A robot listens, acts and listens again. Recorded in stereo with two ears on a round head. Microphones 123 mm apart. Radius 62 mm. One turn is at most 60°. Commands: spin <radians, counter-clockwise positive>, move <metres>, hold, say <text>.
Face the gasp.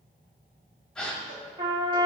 spin 0.52
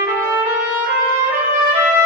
hold
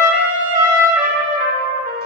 say I heard a gasp, but can't make it out now. It was about 25° right or 145° left.